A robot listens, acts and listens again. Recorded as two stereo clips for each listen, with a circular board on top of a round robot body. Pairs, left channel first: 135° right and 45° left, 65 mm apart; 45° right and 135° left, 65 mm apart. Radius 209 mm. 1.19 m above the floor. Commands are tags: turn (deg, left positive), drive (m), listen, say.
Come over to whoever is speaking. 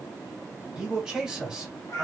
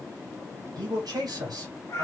<turn deg="125"/>
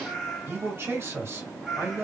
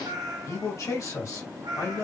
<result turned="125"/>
<drive m="1.0"/>
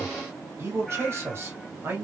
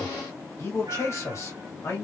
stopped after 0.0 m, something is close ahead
<say>Something is in my way. I am facing the man speaking but have not reached it.</say>